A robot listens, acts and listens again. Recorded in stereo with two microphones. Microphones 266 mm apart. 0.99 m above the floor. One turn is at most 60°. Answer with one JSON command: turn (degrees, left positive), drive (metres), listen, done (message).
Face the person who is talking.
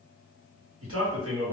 {"turn": -55}
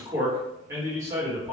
{"turn": -10}
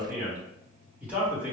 {"done": "Found it: a man speaking, straight ahead, 1 to 2 m away."}